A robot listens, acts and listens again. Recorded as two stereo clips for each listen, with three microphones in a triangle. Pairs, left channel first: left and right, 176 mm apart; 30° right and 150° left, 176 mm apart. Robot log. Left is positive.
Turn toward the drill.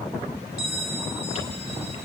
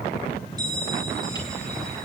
cmd idle
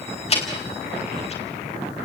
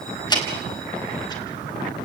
cmd idle
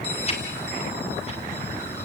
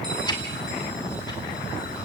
end: I can't make out a drill to turn to.